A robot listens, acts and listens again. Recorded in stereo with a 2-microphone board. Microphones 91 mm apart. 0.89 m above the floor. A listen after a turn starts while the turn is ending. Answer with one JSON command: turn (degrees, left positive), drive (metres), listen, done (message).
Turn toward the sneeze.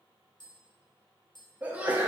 {"turn": -15}
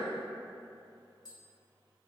{"listen": true}
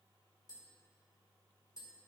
{"done": "I heard a sneeze, but can't make it out now. It was about straight ahead or 150° right."}